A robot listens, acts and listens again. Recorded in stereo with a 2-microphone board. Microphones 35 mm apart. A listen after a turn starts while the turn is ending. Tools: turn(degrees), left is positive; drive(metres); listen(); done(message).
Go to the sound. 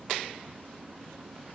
listen()
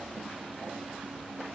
listen()
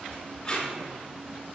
turn(degrees=25)
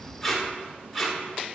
drive(metres=1.0)
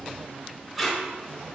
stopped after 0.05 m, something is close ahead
done("Blocked. The tape being pulled is further on, straight ahead.")